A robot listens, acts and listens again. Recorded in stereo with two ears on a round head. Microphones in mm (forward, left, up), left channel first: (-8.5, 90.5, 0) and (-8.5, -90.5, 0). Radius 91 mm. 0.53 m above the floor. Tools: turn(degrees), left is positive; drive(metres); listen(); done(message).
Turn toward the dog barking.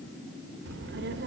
listen()
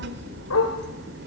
turn(degrees=90)
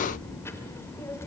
listen()
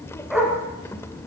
done("Found it: a dog barking, straight ahead.")